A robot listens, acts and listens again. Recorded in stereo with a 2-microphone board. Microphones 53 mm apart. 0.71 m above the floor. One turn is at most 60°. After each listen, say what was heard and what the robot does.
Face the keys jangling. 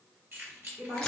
The keys jangling: about 45° right or 135° right. Turn 45° right.
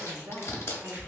Keep listening.
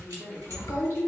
Keep listening.
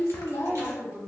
I heard keys jangling, but can't make it out now. It was about straight ahead or 90° right.